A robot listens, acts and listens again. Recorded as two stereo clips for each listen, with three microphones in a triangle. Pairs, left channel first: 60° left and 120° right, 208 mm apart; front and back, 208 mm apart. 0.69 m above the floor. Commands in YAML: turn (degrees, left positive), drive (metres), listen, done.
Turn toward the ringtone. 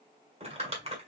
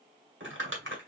listen: true
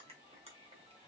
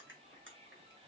listen: true
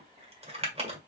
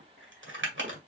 done: "I can't make out a ringtone, only crumpling."